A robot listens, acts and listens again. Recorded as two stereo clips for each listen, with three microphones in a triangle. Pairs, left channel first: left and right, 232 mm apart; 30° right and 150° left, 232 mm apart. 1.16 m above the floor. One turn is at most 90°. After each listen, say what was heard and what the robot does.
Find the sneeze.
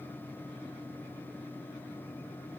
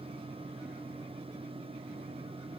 Keep listening.
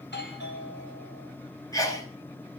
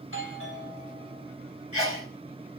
The sneeze: 165° left. Turn 90° left.
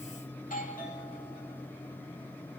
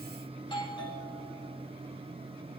Nothing new. It was at 75° left. Turn 75° left.
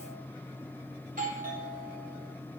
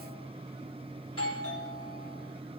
Facing where the sneeze came from. I can't hear it now.